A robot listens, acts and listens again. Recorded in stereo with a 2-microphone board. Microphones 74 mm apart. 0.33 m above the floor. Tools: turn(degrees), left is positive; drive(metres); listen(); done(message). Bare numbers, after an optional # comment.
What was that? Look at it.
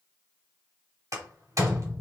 # The door slam: about 50° right or 130° right.
turn(-50)
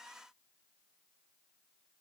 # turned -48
listen()
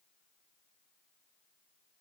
done("I heard a door slam, but can't make it out now. It was about 5° right or 80° right.")